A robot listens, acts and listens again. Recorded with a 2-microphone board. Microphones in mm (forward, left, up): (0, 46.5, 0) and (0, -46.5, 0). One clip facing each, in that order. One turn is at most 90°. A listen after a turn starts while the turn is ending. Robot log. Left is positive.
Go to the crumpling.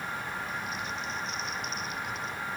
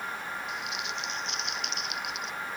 cmd yaw -90
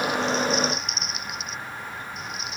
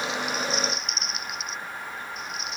cmd fwd 1.0
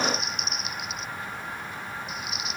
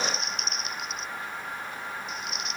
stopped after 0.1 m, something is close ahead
end: Blocked. The crumpling is further on, straight ahead.